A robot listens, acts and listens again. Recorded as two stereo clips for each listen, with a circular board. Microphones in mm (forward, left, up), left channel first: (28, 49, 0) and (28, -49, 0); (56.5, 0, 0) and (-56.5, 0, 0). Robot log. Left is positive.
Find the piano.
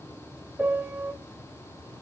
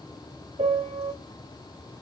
note: The piano: 165° right.
cmd yaw -165
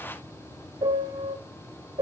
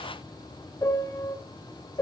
note: The piano is now 60° right.
cmd yaw -60
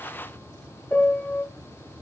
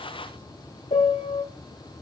note: The piano is now 15° left.
cmd yaw +15
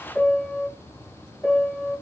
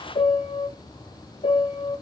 note: The piano is now 10° left.
cmd yaw +10
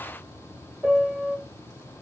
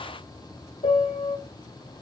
end: Facing the piano.